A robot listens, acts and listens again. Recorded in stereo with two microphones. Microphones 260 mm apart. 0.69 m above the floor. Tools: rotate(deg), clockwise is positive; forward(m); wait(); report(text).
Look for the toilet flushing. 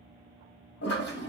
rotate(-60)
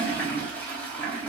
report("Facing the toilet flushing, under 1 m away.")